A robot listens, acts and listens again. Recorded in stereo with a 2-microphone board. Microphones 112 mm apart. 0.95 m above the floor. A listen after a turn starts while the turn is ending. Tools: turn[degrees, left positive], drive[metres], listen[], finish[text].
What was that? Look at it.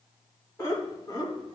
Thought: The laughter: about 35° left or 145° left.
Action: turn[35]
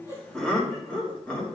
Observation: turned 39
Thought: So it is at 10° left.
Action: turn[10]
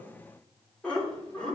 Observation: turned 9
Thought: The laughter is now 10° left.
Action: turn[10]
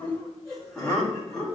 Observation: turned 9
Action: finish[Facing the laughter, 2 to 4 m away.]